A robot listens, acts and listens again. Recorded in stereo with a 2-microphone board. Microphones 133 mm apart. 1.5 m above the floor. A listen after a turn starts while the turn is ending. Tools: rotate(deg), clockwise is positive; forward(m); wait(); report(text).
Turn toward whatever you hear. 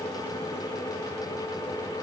wait()
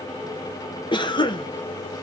rotate(-35)
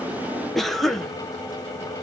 report("Found it: a cough, straight ahead.")